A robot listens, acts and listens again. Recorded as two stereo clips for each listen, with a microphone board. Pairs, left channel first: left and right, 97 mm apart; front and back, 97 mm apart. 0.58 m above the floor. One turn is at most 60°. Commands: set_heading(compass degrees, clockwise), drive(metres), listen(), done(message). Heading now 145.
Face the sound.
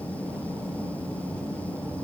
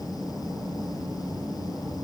listen()
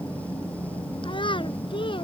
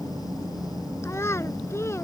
set_heading(85)
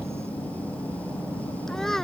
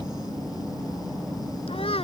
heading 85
done("Found it: a child speaking, straight ahead.")